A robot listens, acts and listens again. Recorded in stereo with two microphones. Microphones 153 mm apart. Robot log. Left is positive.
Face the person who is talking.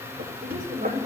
note: The woman speaking: about 50° right or 130° right.
cmd yaw -50
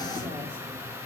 cmd idle
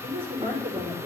note: So it is at 80° right.
cmd yaw -80
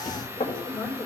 end: Found it: a woman speaking, straight ahead, over 4 m away.